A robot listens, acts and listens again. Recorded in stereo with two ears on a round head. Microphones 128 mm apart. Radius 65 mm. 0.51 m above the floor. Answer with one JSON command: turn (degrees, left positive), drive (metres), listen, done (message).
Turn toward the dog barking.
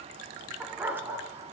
{"turn": -15}
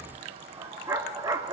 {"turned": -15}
{"turn": -25}
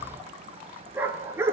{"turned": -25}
{"turn": -15}
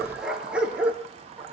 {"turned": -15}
{"turn": -30}
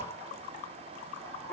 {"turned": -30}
{"turn": 15}
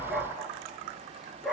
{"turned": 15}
{"done": "Facing the dog barking, 2 to 4 m away."}